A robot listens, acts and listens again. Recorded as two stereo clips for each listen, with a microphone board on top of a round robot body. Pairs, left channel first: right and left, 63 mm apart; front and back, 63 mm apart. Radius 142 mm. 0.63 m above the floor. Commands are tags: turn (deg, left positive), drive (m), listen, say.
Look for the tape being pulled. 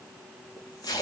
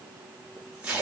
<turn deg="-105"/>
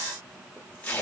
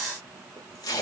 <turn deg="-20"/>
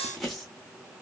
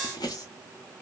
<say>Facing the tape being pulled, 1 to 2 m away.</say>